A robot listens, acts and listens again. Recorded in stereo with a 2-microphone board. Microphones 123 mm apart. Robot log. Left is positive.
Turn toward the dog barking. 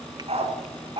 note: The dog barking: about 50° right or 130° right.
cmd yaw -50
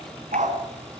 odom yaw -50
note: So it is at 85° right.
cmd yaw -85
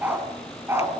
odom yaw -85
note: The dog barking is now 20° right.
cmd yaw -20
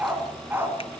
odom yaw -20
note: The dog barking is now 20° right.
cmd yaw -20
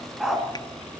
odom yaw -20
end: Found it: a dog barking, straight ahead.